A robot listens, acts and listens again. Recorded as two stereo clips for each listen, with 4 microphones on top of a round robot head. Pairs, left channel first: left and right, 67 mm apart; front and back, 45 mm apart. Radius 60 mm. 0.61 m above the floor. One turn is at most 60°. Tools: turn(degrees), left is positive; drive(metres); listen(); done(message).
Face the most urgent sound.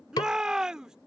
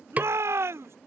turn(degrees=-60)
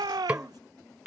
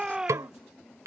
turn(degrees=-60)
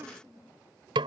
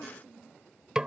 turn(degrees=-45)
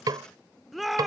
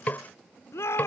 done("Found it: a shout, straight ahead.")